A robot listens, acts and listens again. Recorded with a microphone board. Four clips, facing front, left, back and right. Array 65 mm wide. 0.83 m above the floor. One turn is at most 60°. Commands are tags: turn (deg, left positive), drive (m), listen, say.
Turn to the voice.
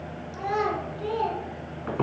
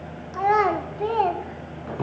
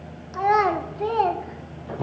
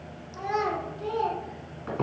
<turn deg="60"/>
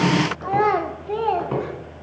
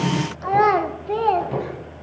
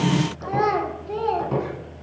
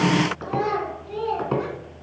<turn deg="60"/>
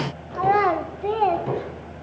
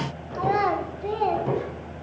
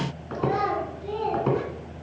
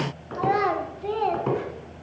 <say>Found it: a child speaking, straight ahead, 1 to 2 m away.</say>